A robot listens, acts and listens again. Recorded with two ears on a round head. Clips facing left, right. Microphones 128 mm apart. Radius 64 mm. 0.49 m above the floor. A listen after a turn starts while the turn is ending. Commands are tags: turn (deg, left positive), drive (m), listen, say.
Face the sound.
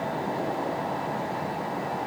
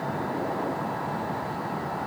<listen/>
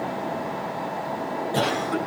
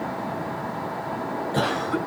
<turn deg="20"/>
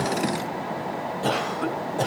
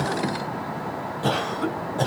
<say>Facing the cough.</say>